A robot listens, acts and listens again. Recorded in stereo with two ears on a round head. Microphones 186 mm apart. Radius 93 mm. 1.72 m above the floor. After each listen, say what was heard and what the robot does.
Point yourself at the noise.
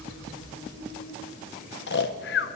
The snoring: about 55° left or 125° left. Turn 55° left.
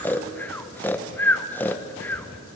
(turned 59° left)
So it is at 10° left. Turn 10° left.
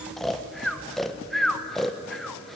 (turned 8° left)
Facing the snoring.